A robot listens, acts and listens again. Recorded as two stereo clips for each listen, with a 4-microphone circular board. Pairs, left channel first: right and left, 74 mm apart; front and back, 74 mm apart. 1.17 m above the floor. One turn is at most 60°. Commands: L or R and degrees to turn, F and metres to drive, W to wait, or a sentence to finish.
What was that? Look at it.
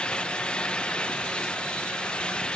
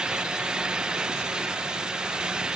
W
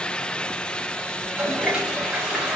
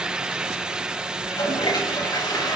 L15
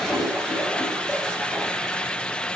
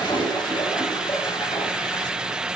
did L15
Facing the toilet flushing.